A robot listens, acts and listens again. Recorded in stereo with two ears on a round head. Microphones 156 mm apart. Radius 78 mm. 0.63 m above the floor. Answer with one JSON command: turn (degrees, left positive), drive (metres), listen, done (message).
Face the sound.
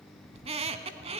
{"turn": -35}
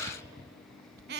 {"turn": -110}
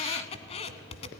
{"turn": 40}
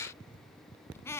{"turn": 15}
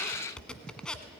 {"done": "Found it: a squeak, straight ahead, 1 to 2 m away."}